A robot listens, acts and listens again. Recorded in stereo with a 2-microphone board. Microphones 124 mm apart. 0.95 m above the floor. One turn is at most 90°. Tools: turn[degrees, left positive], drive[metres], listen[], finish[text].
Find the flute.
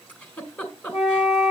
Thought: The flute: about 70° left or 110° left.
Action: turn[70]
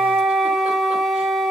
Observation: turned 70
Action: finish[Facing the flute, 2 to 4 m away.]